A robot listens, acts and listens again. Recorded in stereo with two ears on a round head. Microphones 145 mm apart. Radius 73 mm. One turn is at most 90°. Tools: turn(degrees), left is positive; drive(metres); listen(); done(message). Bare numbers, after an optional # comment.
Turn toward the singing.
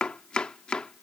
listen()
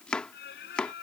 # The singing: about 75° left or 105° left.
turn(75)
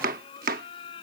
# So it is at 35° left.
turn(35)
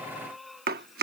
done("Facing the singing.")